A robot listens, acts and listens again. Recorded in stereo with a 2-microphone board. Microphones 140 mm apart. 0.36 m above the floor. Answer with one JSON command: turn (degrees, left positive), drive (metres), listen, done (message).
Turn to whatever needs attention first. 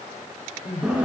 {"turn": 60}
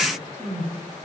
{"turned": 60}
{"done": "Facing the crying, over 4 m away."}